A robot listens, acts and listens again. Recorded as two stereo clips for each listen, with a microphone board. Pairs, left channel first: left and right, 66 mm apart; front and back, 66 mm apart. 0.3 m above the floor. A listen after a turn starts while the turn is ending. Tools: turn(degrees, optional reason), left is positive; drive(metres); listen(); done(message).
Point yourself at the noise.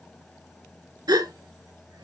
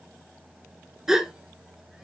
turn(degrees=-100, reason="The gasp: 100° right.")
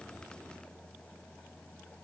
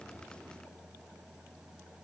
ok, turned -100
done("Facing where the gasp came from. I can't hear it now.")